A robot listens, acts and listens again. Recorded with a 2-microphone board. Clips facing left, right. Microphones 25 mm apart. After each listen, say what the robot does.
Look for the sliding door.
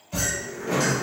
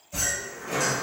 Turn 35° left.
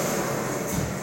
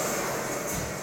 Turn 10° left.
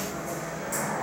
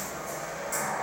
Found it: a sliding door, straight ahead.